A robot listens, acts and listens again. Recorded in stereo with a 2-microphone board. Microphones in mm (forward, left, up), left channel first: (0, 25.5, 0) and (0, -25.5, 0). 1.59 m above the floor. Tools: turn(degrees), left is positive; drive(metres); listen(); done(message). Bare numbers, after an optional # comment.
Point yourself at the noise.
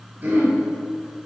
# The throat clearing: about 35° right or 145° right.
turn(-35)
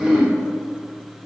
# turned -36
done("Facing the throat clearing.")